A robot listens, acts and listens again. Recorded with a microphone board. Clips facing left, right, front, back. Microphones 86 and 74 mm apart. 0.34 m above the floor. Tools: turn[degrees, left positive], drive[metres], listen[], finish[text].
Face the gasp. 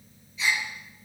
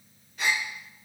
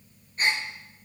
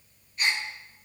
Thought: The gasp: 55° right.
Action: turn[-55]
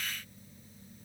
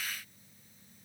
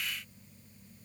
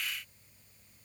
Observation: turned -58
Action: finish[Facing where the gasp came from. I can't hear it now.]